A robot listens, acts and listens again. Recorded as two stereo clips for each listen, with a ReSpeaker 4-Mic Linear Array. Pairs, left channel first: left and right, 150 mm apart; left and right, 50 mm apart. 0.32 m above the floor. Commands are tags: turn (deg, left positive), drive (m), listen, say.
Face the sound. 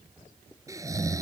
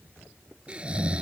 <turn deg="-20"/>
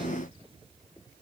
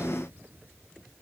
<listen/>
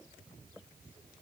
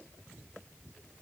<listen/>
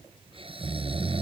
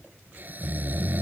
<turn deg="-140"/>
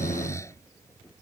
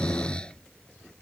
<turn deg="20"/>
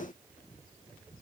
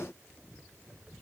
<listen/>
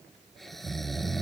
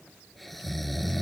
<say>Found it: snoring, straight ahead.</say>